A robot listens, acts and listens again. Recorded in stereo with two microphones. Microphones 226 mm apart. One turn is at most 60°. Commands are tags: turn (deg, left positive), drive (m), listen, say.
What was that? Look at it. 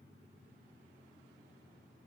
<listen/>
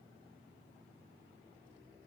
<listen/>
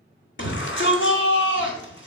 <turn deg="55"/>
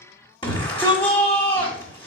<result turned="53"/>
<turn deg="25"/>
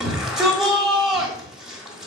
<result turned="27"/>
<say>Facing the shout, 1 to 2 m away.</say>